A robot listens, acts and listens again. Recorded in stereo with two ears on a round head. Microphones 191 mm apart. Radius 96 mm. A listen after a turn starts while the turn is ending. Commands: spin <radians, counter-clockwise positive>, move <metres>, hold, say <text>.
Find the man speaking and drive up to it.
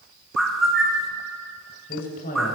spin 0.70
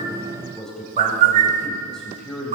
move 1.0
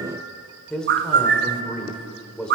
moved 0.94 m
move 1.0
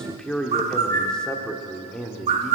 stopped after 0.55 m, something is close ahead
say Arrived at the man speaking, straight ahead.